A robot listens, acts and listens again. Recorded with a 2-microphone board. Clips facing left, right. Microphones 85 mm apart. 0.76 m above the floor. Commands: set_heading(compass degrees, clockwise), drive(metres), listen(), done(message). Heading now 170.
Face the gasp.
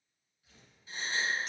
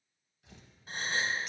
set_heading(220)
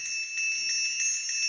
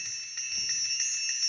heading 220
listen()
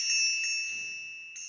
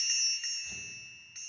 done("I heard a gasp, but can't make it out now. It was about straight ahead or 80° right.")